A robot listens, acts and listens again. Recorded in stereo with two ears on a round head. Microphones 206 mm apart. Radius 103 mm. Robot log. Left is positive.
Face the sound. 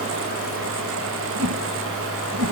note: The whoosh: about 70° right or 110° right.
cmd yaw -70
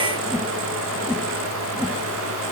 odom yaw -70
end: Facing the whoosh, 1 to 2 m away.